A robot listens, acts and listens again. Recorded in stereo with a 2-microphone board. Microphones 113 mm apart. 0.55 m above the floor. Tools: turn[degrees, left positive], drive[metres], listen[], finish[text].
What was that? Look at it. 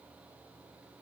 Action: listen[]
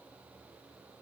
Action: listen[]
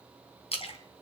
Thought: The splash: about 60° left or 120° left.
Action: turn[60]
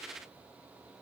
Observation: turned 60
Action: listen[]
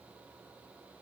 Action: finish[I heard a splash, but can't make it out now. It was about straight ahead or 60° left.]